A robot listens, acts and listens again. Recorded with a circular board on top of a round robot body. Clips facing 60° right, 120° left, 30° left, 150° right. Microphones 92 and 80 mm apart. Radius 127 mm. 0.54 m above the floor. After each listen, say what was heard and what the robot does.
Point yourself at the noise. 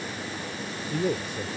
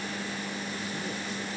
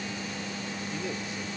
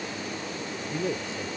The man speaking: 90° right. Turn 90° right.
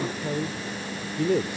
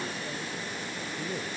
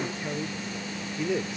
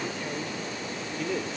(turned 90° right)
The man speaking is now 55° right. Turn 55° right.
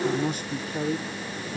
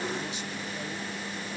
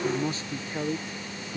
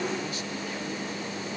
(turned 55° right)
The man speaking is now 35° right. Turn 35° right.
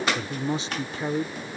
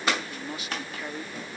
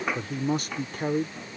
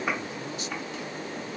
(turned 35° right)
Found it: a man speaking, straight ahead.